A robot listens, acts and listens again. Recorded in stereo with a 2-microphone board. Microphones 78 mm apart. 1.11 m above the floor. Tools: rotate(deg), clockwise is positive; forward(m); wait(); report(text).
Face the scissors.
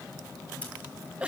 wait()
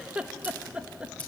wait()
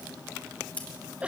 rotate(-20)
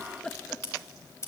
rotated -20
rotate(-140)
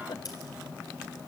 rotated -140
wait()
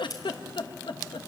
rotate(-55)
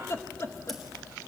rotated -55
wait()
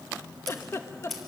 report("Found it: scissors, straight ahead.")